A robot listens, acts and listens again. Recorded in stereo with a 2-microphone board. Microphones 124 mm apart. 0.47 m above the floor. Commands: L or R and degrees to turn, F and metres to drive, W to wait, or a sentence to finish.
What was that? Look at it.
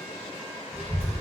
R50
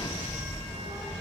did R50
R85
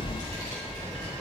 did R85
L25
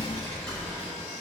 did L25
Found it: a child speaking, straight ahead.